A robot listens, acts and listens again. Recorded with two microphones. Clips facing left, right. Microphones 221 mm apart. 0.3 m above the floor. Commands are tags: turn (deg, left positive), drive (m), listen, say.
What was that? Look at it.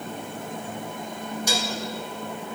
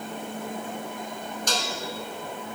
<turn deg="30"/>
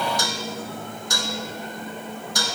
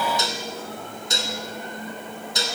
<turn deg="-25"/>
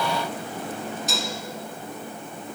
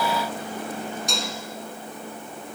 <say>Found it: dishes clattering, straight ahead.</say>